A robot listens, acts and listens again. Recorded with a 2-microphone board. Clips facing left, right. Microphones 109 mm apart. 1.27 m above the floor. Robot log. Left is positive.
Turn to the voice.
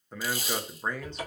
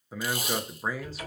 cmd yaw -30
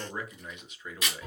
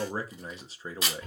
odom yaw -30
note: So it is at 145° right.
cmd yaw -145
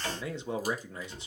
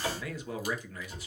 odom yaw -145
note: The man speaking is now 25° left.
cmd yaw +25
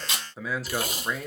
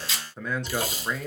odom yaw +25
end: Found it: a man speaking, straight ahead, under 1 m away.